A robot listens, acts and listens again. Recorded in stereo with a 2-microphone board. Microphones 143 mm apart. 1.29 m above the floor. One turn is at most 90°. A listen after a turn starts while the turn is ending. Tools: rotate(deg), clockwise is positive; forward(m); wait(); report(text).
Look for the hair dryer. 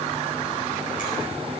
wait()
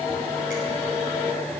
wait()
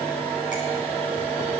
report("I can't make out a hair dryer to turn to.")